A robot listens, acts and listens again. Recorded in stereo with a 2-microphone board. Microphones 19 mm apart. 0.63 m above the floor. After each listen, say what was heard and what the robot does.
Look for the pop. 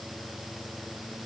Keep listening.
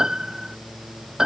Keep listening.
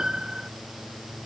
I can't make out a pop to turn to.